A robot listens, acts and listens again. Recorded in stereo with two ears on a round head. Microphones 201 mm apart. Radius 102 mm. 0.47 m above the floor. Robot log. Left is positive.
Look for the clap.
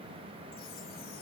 cmd idle
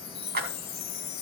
note: The clap: about 40° right or 140° right.
cmd yaw -40
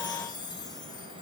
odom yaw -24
cmd idle
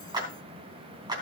note: So it is at 20° right.
cmd yaw -20
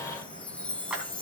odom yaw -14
end: Facing the clap.